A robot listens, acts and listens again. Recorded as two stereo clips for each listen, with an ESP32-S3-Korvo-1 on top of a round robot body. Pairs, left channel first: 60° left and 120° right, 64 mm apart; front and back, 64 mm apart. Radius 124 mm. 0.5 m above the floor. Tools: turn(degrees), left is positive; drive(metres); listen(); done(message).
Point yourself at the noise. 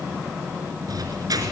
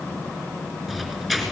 turn(degrees=-85)
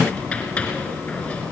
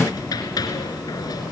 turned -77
turn(degrees=-10)
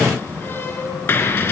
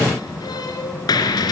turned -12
done("Facing the squeak, over 4 m away.")